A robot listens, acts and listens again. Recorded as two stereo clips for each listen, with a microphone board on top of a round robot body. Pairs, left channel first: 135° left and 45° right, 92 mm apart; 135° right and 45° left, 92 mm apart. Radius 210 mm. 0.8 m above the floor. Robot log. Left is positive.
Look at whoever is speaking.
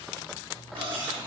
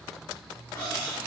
cmd idle
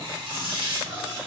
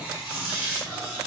cmd idle
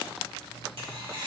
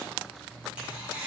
end: I can't make out anyone speaking to turn to.